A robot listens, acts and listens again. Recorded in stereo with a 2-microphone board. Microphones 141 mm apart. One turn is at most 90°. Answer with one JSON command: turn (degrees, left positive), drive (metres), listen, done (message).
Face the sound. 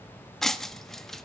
{"turn": 30}
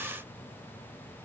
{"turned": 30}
{"listen": true}
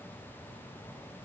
{"done": "I heard breaking glass, but can't make it out now. It was about 30° right or 150° left."}